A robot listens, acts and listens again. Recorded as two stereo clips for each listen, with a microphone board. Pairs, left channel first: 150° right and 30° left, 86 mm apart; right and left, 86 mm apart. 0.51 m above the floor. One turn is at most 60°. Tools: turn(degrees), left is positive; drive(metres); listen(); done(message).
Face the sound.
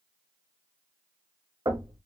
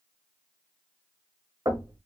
turn(degrees=60)
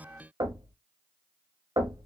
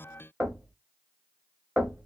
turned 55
done("Found it: knocking, straight ahead, 1 to 2 m away.")